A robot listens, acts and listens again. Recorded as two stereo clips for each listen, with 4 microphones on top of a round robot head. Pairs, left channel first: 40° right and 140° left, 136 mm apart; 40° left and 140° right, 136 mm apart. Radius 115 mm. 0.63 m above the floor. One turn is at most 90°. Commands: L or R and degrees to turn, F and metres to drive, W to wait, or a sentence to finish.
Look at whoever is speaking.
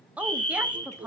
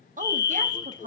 R90
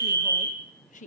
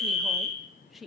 R50
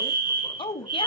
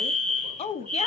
Facing the woman speaking, 1 to 2 m away.